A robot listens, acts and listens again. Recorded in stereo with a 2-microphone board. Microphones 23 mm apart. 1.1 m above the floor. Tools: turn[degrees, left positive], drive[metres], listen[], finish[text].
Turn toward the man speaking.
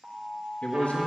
Thought: The man speaking: about 70° left or 110° left.
Action: turn[70]
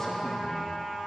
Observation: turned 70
Action: listen[]
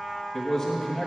Thought: So it is at 10° left.
Action: turn[10]
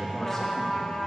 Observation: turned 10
Action: finish[Facing the man speaking.]